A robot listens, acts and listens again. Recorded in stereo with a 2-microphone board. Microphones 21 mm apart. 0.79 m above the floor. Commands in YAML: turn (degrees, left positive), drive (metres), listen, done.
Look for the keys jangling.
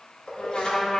turn: 65
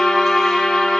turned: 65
listen: true
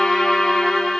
listen: true
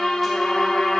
done: "I heard keys jangling, but can't make it out now. It was about straight ahead or 50° left."